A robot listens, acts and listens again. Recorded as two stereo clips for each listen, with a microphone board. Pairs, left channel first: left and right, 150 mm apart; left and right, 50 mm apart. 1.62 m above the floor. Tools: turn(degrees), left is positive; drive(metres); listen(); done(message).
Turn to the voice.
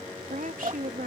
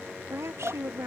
turn(degrees=-65)
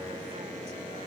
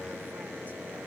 listen()
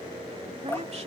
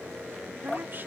listen()
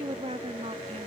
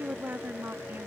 turn(degrees=-45)
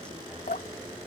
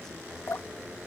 listen()
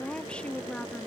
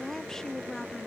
done("Facing the woman speaking.")